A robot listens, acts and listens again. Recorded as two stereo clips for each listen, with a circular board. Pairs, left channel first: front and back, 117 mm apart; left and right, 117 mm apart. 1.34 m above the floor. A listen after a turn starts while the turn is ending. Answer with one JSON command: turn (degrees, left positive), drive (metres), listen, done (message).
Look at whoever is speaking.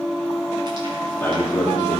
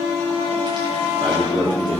{"turn": -70}
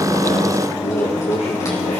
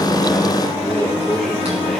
{"done": "Facing the man speaking."}